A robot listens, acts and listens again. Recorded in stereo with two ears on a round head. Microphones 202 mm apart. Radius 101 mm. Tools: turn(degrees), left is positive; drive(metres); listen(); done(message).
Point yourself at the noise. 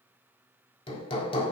turn(degrees=25)
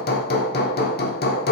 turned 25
turn(degrees=135)
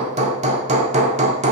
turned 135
turn(degrees=-30)
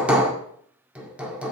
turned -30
done("Found it: hammering, straight ahead.")